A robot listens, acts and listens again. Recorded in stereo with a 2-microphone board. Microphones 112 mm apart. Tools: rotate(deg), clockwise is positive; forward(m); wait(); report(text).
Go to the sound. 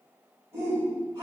rotate(30)
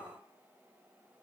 wait()
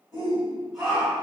forward(1.0)
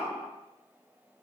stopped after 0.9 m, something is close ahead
report("I am next to the shout.")